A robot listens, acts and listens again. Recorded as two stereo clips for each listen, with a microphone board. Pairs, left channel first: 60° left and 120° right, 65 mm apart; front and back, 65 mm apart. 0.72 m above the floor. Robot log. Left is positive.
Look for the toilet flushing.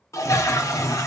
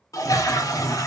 note: The toilet flushing: 25° left.
cmd yaw +25
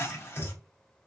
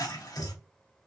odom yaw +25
note: The toilet flushing is now 10° left.
cmd yaw +10
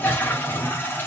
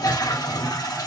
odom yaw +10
end: Facing the toilet flushing.